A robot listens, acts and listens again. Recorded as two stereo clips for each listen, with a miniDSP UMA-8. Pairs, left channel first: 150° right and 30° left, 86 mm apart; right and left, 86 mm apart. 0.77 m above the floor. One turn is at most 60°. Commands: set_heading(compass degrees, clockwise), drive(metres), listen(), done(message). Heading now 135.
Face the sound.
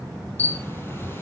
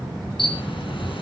set_heading(195)
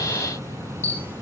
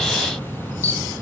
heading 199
set_heading(219)
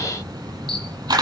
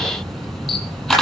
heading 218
done("Facing the camera shutter.")